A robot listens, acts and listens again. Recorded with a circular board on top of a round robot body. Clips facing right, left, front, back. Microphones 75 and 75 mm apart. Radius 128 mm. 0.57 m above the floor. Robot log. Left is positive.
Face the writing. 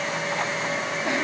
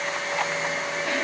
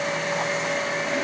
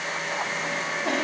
cmd idle
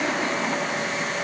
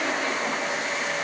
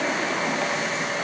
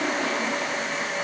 cmd idle
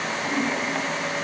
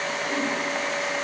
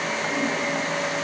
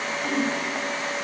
end: I can't make out writing to turn to.